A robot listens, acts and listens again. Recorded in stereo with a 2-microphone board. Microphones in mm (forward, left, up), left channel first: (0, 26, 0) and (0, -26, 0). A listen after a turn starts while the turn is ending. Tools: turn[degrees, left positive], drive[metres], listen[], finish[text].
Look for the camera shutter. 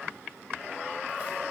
Action: listen[]
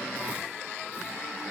Action: listen[]
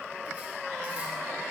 Action: finish[I can't make out a camera shutter to turn to.]